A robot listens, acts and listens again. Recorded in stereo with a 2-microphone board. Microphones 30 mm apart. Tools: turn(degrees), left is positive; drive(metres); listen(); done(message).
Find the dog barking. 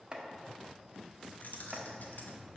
listen()
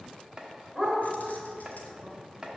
turn(degrees=-30)
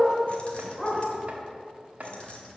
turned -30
turn(degrees=30)
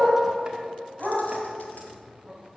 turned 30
turn(degrees=-30)
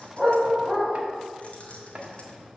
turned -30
turn(degrees=-10)
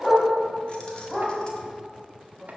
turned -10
done("Facing the dog barking, 2 to 4 m away.")